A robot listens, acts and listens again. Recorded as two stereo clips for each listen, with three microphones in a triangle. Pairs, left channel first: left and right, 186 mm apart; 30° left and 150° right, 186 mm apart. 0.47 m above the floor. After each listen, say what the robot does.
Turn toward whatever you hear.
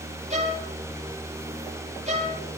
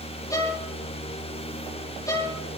Turn 45° right.
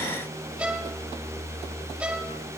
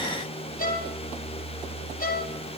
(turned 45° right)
Turn 10° right.
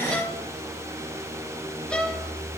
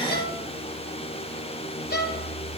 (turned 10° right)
Facing the violin, 2 to 4 m away.